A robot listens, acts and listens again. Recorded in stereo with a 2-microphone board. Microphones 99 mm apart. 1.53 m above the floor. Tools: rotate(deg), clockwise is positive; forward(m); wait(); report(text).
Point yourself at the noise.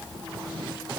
wait()
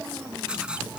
rotate(30)
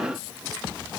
wait()
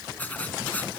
rotate(-15)
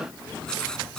rotate(-10)
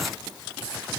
wait()
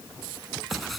wait()
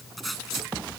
report("Found it: writing, straight ahead.")